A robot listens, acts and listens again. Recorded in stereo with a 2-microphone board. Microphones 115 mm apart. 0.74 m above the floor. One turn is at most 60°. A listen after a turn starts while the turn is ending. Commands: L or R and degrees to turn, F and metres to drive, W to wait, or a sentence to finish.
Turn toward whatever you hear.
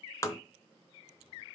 L30
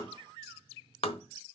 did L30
L60
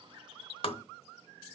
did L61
L60
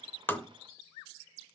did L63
W
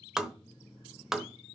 Facing the tapping.